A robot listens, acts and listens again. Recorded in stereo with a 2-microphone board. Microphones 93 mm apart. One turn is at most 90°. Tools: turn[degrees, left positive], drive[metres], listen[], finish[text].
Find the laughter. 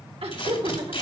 Action: turn[-90]
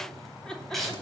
Thought: So it is at 10° left.
Action: turn[10]
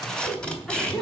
Action: finish[Found it: laughter, straight ahead.]